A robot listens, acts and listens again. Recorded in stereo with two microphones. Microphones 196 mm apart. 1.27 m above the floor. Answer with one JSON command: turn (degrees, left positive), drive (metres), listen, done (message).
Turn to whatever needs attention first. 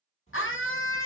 {"turn": 75}
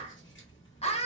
{"turn": 30}
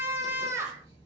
{"turn": -10}
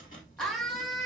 {"done": "Facing the scream, under 1 m away."}